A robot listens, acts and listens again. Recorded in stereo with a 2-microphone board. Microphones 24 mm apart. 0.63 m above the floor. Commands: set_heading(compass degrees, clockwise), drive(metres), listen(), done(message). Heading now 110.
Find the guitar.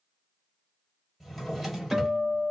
set_heading(140)
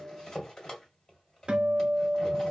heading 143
set_heading(258)
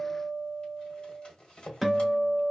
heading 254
done("Found it: a guitar, straight ahead.")